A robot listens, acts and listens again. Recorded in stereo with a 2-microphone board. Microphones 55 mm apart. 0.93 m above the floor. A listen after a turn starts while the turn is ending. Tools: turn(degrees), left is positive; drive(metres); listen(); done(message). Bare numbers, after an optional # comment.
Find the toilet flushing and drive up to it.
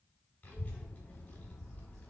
listen()
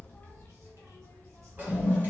# The toilet flushing: about 30° right or 150° right.
turn(-30)
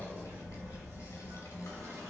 # So it is at 120° right.
turn(-120)
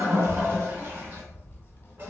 listen()
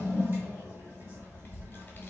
# The toilet flushing is now 35° right.
turn(-35)
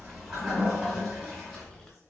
# The toilet flushing is now 10° right.
turn(-10)
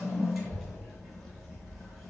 drive(1.0)
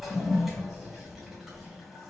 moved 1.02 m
drive(1.0)
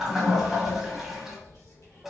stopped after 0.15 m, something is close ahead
# The toilet flushing is now 10° right.
turn(-10)
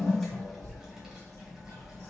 done("Arrived at the toilet flushing, straight ahead.")